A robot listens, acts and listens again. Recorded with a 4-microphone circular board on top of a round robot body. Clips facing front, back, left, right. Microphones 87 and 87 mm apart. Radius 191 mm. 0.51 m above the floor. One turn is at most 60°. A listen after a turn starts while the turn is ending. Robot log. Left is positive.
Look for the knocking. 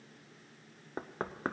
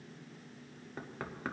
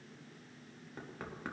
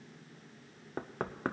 note: The knocking: 50° right.
cmd yaw -50
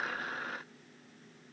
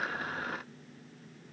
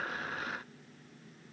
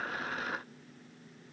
cmd idle
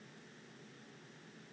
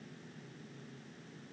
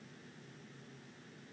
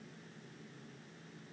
cmd idle
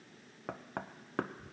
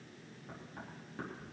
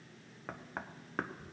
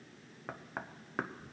end: Found it: knocking, straight ahead.